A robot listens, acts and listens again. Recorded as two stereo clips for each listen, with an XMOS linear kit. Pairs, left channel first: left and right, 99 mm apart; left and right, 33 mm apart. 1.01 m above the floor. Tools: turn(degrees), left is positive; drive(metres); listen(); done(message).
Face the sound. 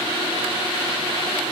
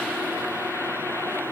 listen()
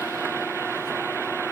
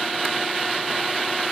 listen()
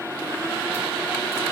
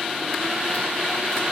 done("I can't make out anything to turn to.")